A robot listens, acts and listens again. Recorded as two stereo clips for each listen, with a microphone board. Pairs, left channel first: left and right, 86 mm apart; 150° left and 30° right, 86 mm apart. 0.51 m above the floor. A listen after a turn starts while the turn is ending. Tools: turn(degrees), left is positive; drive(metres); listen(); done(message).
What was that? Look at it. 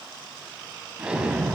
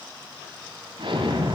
turn(degrees=-10)
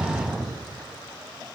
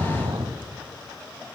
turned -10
done("Found it: an explosion, straight ahead, 1 to 2 m away.")